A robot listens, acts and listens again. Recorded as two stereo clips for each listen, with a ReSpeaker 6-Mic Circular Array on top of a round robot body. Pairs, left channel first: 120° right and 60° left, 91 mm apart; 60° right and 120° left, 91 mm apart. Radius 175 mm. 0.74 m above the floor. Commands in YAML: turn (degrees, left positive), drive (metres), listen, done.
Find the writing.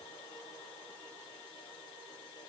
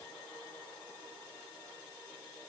listen: true
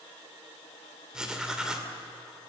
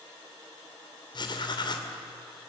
turn: -20
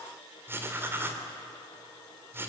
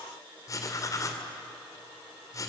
done: "Found it: writing, straight ahead."